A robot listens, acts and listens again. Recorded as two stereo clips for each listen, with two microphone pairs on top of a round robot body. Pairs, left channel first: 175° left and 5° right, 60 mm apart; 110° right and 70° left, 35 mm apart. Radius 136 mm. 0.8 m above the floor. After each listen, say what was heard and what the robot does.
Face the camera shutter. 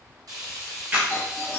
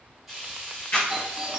The camera shutter: 75° right. Turn 75° right.
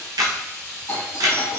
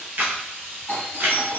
The camera shutter is now 20° left. Turn 20° left.
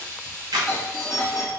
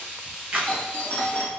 Found it: a camera shutter, straight ahead.